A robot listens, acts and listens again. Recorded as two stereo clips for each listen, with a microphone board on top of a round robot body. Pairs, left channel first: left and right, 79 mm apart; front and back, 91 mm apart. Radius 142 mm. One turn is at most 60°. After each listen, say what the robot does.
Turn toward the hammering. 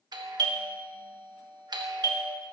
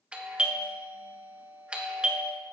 Keep listening.
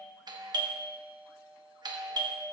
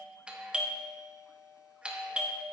Keep listening.
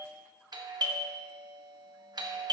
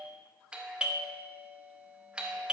I can't make out hammering to turn to.